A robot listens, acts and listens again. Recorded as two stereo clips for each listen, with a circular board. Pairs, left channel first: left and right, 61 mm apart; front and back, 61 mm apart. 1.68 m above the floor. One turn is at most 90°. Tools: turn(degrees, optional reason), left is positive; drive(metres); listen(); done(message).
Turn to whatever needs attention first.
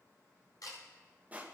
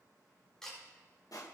listen()
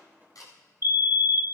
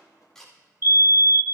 turn(degrees=-90, reason="The fire alarm: 135° right.")
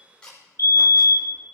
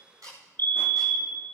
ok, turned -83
turn(degrees=-55, reason="The fire alarm is now 55° right.")
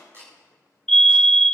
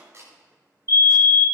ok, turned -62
turn(degrees=10, reason="The fire alarm is now 10° left.")
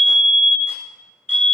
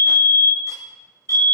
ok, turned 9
done("Facing the fire alarm.")